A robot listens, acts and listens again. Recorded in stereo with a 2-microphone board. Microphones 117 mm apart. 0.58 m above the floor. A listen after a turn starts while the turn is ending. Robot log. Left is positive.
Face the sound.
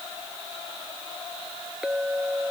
cmd yaw -30
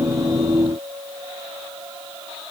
note: So it is at 140° right.
cmd yaw -140
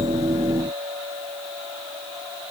note: The clink is now 70° right.
cmd yaw -70
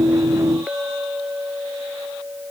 note: The clink is now 10° right.
cmd yaw -10
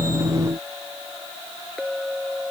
end: Facing the clink.